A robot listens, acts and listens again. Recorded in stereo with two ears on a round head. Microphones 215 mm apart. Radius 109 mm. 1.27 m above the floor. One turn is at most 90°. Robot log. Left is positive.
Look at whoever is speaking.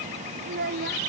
note: The child speaking: about 40° right or 140° right.
cmd yaw -40
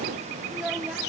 cmd idle
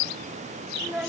end: Found it: a child speaking, straight ahead.